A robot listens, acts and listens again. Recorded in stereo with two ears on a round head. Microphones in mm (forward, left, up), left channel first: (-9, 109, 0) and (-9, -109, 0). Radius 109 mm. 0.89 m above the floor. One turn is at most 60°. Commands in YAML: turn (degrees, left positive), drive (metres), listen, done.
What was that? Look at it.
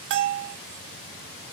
turn: -50
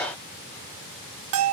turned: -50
turn: -60
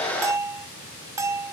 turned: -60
turn: -15
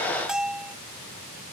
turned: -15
done: "Facing the bell."